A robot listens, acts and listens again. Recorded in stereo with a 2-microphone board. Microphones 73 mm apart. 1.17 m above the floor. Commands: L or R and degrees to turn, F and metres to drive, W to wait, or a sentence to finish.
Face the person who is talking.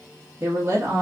R35
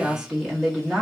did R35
Found it: a woman speaking, straight ahead, 1 to 2 m away.